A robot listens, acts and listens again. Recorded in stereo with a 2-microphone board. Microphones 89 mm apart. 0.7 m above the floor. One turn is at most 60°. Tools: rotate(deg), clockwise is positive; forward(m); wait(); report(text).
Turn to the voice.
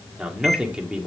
rotate(30)
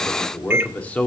rotate(-20)
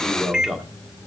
report("Facing the man speaking, 1 to 2 m away.")